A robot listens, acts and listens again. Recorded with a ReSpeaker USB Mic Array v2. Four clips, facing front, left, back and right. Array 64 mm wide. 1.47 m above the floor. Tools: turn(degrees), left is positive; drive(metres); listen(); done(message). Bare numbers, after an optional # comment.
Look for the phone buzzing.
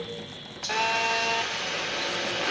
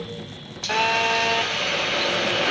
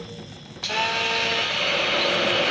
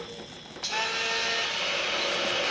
# The phone buzzing: 75° left.
turn(75)
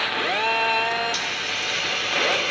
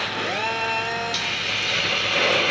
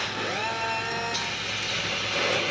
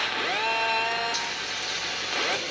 # The phone buzzing is now 10° right.
turn(-10)
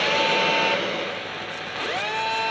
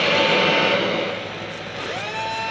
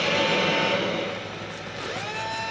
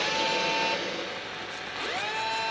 done("Facing the phone buzzing.")